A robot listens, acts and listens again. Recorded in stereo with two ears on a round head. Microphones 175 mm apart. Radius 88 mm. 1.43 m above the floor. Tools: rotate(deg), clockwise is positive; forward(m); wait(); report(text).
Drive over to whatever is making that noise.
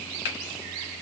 rotate(-60)
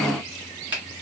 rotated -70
rotate(10)
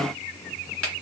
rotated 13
forward(1.0)
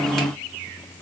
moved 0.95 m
wait()
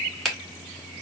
forward(1.0)
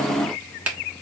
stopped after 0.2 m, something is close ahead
report("I am next to the finger snap.")